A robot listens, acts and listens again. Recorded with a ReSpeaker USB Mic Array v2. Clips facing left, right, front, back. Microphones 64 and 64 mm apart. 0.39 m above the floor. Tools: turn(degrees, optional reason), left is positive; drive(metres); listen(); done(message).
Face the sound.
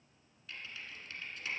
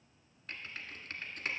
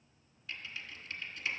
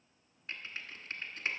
turn(degrees=-130, reason="The typing on a keyboard: 130° right.")
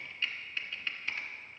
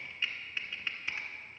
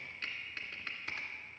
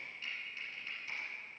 turn(degrees=-15, reason="The typing on a keyboard is now 15° right.")
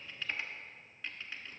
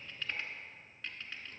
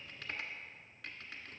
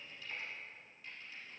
done("Facing the typing on a keyboard.")